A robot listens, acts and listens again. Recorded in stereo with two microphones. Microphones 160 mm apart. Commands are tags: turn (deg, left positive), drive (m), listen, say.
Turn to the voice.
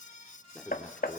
<turn deg="30"/>
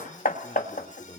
<turn deg="145"/>
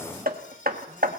<listen/>
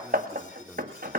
<turn deg="-10"/>
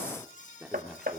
<say>Found it: a man speaking, straight ahead.</say>